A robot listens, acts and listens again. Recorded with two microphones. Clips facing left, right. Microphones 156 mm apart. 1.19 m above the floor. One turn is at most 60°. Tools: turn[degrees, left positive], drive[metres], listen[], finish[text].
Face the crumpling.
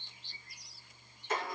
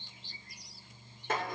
Action: listen[]
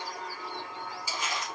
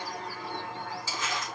Thought: The crumpling: about 15° left or 165° left.
Action: turn[15]
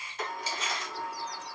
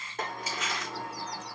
Thought: So it is at 150° left.
Action: turn[60]
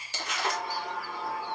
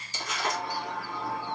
Thought: The crumpling is now 85° left.
Action: turn[60]
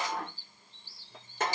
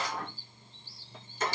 Thought: Nothing new. It was at 25° left.
Action: turn[25]
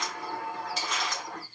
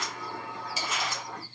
Action: finish[Facing the crumpling, 1 to 2 m away.]